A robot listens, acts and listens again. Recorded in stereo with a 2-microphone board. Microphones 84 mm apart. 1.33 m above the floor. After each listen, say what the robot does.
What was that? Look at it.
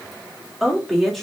Turn 30° left.
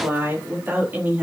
Turn 20° right.
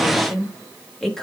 Found it: a woman speaking, straight ahead, 2 to 4 m away.